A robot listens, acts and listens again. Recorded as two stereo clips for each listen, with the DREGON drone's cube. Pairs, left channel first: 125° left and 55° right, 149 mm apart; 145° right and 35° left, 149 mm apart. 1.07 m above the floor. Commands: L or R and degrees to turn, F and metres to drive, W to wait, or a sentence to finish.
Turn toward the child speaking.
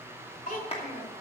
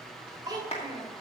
L95
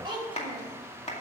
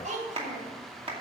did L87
Found it: a child speaking, straight ahead.